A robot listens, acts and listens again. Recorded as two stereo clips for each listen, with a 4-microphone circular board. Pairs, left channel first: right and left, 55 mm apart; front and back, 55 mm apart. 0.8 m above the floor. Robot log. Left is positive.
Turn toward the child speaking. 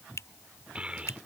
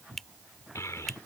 note: The child speaking: 20° left.
cmd yaw +20
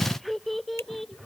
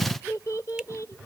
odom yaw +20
end: Facing the child speaking.